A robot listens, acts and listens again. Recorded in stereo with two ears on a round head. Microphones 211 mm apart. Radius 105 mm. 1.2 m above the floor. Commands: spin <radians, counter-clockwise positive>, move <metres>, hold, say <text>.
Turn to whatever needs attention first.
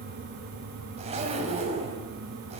hold
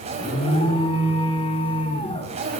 spin 0.44
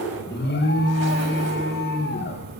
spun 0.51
spin 2.18
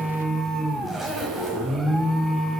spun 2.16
say Facing the alarm.